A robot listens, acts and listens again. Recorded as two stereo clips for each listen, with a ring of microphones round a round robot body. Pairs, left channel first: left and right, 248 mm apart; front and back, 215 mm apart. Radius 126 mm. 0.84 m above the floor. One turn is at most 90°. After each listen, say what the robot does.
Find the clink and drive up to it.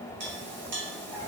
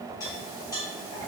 Turn 75° right.
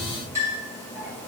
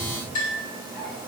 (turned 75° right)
Turn 10° right.
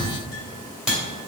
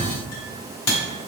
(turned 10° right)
Drive 1.0 m forward.
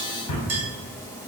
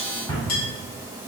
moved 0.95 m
Turn 10° right.
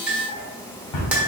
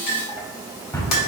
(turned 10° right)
Drive 1.0 m forward.
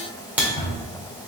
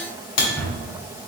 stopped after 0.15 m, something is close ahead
Arrived at the clink, straight ahead.